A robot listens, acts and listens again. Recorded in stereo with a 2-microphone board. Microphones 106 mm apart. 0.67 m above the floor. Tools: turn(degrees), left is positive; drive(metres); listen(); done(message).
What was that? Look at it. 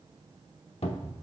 turn(degrees=75)
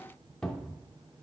turn(degrees=10)
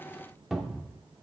done("Facing the cupboard door.")